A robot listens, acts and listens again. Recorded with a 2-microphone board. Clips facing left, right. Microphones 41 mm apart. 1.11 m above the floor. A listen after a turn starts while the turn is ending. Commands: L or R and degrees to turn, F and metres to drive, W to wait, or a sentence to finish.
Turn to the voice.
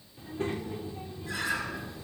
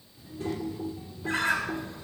L40
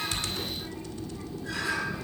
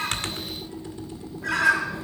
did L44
W
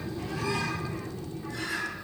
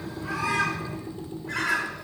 L95
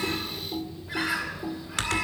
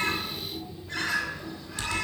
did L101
R10
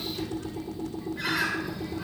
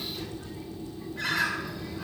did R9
W
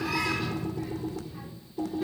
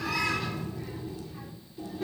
Facing the child speaking, 2 to 4 m away.